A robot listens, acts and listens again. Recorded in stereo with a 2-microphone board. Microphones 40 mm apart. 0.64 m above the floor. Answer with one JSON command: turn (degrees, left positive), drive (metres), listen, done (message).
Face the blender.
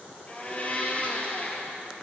{"turn": 30}
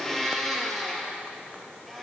{"done": "Found it: a blender, straight ahead."}